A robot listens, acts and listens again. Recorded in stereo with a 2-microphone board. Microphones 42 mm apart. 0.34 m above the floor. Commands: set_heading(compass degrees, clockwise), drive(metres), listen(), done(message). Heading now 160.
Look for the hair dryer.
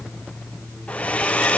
set_heading(135)
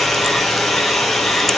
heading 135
done("Facing the hair dryer.")